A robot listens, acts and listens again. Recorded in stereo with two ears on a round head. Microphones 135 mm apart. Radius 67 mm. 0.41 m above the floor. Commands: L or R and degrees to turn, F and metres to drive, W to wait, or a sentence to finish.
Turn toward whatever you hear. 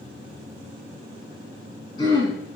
L30
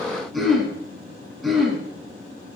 Found it: throat clearing, straight ahead.